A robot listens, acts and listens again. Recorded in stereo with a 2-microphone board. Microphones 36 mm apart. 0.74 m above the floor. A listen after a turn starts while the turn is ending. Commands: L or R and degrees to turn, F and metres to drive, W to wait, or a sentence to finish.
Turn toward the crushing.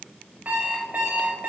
W
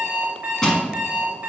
L15
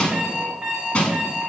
L150
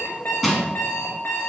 Facing the crushing, 1 to 2 m away.